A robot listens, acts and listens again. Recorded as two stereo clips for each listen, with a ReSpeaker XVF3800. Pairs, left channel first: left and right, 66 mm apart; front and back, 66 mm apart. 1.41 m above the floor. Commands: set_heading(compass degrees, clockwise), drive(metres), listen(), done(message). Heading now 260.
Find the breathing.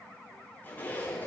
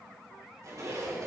listen()
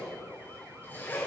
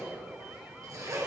listen()
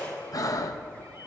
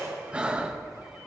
set_heading(155)
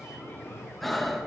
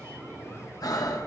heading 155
done("Found it: breathing, straight ahead, 1 to 2 m away.")